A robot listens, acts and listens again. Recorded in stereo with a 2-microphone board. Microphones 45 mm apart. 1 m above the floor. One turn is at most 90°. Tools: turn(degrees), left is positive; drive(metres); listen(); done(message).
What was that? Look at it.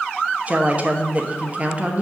turn(degrees=-35)
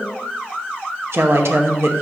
turn(degrees=-90)
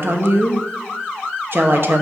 turn(degrees=-60)
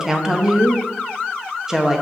turn(degrees=-15)
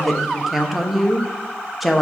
done("Facing the woman speaking, under 1 m away.")